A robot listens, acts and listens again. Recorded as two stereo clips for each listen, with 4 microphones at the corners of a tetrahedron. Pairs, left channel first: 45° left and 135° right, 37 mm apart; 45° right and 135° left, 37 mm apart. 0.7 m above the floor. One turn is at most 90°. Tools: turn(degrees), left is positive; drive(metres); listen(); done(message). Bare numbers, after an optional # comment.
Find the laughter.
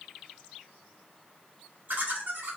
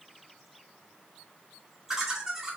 # The laughter: 150° right.
turn(-90)
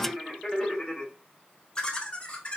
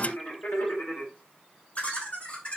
done("Facing the laughter.")